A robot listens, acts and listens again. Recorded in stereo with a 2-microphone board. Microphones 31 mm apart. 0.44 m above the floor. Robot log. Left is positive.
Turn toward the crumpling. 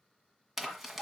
cmd yaw -30
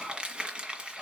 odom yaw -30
note: So it is at 150° right.
cmd yaw -150
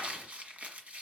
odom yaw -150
note: The crumpling is now 45° right.
cmd yaw -45
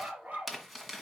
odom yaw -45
end: Facing the crumpling, 1 to 2 m away.